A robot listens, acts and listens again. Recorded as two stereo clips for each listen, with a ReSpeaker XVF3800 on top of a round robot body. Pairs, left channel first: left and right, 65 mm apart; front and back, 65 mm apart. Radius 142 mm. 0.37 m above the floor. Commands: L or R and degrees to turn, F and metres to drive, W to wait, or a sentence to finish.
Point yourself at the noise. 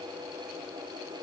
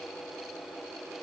W
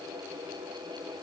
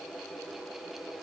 W
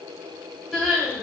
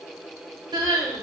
R175
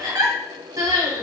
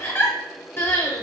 R65
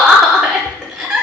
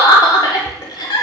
R10
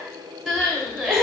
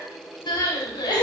Found it: crying, straight ahead.